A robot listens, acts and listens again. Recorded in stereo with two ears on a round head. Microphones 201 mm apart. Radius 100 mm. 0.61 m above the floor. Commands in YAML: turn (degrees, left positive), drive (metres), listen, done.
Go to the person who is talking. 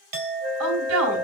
turn: -70
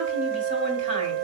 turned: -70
listen: true
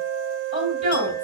turn: -35
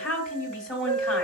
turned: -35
drive: 1.0
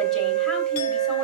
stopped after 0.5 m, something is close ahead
listen: true
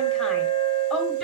listen: true
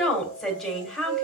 done: "Blocked. The woman speaking is further on, straight ahead."